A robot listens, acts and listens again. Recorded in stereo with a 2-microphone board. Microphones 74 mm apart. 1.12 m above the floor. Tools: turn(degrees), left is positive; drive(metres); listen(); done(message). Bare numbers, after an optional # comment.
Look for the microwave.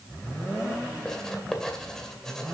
listen()
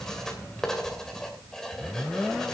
listen()
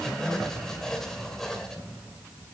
done("I can't make out a microwave to turn to.")